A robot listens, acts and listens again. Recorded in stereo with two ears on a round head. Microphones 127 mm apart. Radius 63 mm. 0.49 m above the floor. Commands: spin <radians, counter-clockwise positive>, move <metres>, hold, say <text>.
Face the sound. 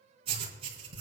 spin -0.79
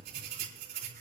spin -1.57
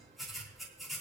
say Found it: writing, straight ahead, over 4 m away.